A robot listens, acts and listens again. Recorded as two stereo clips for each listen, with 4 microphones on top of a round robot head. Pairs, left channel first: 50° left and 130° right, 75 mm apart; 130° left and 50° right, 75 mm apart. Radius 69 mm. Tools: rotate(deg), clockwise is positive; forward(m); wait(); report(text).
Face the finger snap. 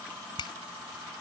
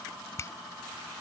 rotate(-75)
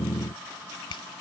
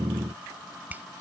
rotate(-25)
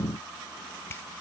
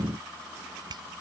rotate(10)
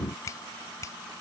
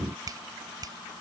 report("Found it: a finger snap, straight ahead.")